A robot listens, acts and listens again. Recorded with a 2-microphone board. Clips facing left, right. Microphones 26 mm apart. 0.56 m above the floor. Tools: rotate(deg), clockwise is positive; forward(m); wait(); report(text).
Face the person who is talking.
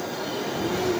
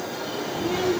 rotate(20)
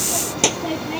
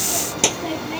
report("Facing the child speaking.")